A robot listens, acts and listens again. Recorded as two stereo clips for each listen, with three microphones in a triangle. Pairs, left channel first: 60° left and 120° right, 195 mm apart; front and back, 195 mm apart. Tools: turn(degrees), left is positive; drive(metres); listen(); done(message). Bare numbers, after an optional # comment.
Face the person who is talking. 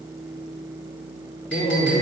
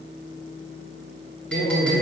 # The man speaking: 25° left.
turn(25)
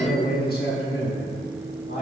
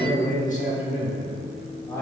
# The man speaking is now 75° left.
turn(75)
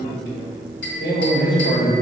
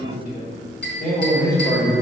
# The man speaking is now 60° left.
turn(60)
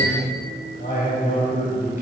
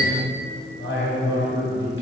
# The man speaking is now 10° left.
turn(10)
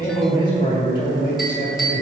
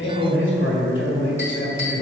done("Found it: a man speaking, straight ahead.")